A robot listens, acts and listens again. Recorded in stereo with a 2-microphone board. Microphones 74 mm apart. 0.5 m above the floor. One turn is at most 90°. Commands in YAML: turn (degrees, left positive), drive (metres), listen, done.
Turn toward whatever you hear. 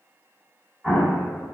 turn: 30
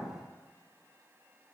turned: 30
listen: true
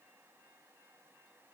done: "I heard an explosion, but can't make it out now. It was about 30° right or 150° left."